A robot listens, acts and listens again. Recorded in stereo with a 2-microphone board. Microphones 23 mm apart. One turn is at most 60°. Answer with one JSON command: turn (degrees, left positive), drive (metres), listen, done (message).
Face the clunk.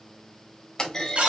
{"turn": 35}
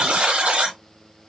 {"listen": true}
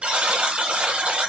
{"done": "I heard a clunk, but can't make it out now. It was about straight ahead or 110° left."}